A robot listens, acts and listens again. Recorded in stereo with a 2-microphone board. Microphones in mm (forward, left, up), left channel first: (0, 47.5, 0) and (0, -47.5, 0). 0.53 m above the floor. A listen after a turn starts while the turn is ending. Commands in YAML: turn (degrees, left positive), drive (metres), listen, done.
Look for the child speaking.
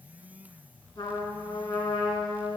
listen: true
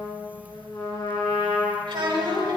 turn: -60
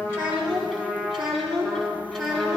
done: "Found it: a child speaking, straight ahead, 2 to 4 m away."